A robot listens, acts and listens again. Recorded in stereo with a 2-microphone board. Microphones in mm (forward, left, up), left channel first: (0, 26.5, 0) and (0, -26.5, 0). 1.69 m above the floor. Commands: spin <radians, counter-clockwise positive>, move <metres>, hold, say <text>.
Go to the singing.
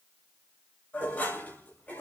hold
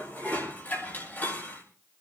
hold
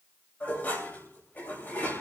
say I can't make out singing, only dishes clattering.